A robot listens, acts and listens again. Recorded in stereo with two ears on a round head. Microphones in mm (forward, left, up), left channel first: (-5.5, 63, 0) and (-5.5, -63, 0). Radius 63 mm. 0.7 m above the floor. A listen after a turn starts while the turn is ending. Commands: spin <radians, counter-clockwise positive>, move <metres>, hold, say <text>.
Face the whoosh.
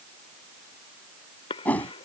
spin 0.52
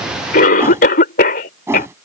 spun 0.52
spin -0.35
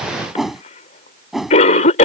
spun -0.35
say Facing the whoosh.